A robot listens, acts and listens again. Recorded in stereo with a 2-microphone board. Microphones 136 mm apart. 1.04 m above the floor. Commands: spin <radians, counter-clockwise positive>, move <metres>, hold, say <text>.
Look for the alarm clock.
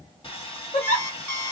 spin 0.52
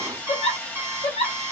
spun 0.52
spin -0.26
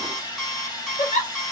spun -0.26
say Facing the alarm clock, 1 to 2 m away.